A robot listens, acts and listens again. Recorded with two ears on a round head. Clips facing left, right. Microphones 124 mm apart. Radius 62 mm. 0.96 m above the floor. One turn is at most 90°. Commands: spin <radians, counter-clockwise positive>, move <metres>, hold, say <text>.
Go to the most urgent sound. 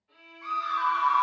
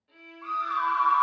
spin 0.44
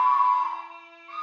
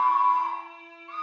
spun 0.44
move 1.0
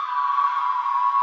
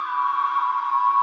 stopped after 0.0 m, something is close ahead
say Blocked. The scream is further on, straight ahead.